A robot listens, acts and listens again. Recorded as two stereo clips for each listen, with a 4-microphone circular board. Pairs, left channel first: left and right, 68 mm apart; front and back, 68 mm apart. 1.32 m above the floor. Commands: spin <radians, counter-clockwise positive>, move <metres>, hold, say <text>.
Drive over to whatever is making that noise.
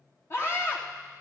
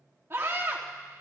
spin 2.27
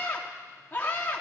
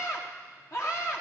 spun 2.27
spin 0.52
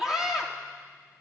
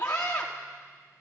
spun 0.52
spin -0.17
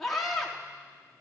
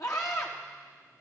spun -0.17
move 1.0
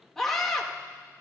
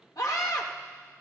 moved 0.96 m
move 1.0
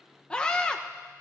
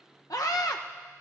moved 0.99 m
spin 0.26
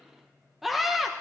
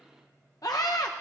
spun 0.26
move 1.0
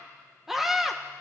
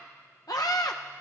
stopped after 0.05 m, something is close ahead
say I am next to the scream.